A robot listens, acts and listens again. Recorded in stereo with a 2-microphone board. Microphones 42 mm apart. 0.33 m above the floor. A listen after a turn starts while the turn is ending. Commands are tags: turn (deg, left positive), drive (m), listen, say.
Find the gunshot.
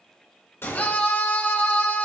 <turn deg="70"/>
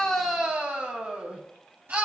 <listen/>
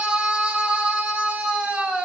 <say>I heard a gunshot, but can't make it out now. It was about straight ahead or 40° left.</say>